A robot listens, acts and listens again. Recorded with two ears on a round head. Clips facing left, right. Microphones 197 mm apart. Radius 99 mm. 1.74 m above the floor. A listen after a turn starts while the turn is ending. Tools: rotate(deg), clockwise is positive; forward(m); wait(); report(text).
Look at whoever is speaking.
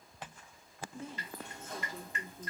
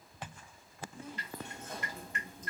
rotate(-25)
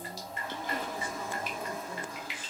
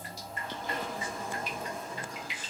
wait()
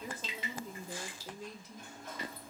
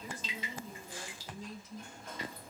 rotate(-130)
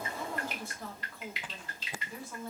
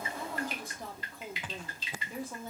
rotate(15)
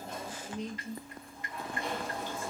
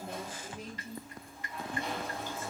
report("Facing the woman speaking, 1 to 2 m away.")